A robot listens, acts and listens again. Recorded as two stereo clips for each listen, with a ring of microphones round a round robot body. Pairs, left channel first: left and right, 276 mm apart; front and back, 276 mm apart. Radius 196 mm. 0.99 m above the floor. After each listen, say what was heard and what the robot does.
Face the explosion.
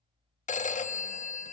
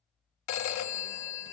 Keep listening.
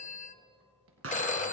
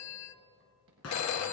The explosion: 55° right. Turn 55° right.
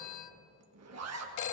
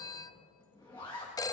I heard an explosion from this way, but can't make it out now.